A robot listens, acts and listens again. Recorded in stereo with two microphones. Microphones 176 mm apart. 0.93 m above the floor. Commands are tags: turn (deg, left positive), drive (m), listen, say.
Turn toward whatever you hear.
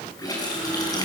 <turn deg="20"/>
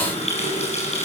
<turn deg="140"/>
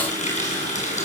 <turn deg="45"/>
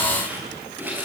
<turn deg="-10"/>
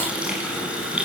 <say>Facing the running tap.</say>